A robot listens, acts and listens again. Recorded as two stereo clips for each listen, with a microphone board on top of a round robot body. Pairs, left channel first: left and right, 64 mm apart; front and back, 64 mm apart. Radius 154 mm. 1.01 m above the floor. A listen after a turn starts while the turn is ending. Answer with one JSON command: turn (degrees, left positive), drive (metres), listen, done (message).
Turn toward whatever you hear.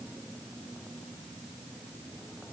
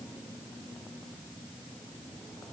{"listen": true}
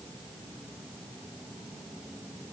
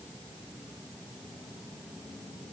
{"listen": true}
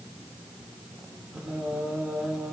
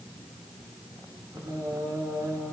{"turn": -165}
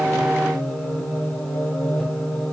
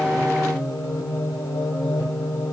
{"turn": 15}
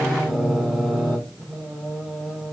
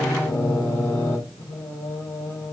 {"done": "Facing the singing."}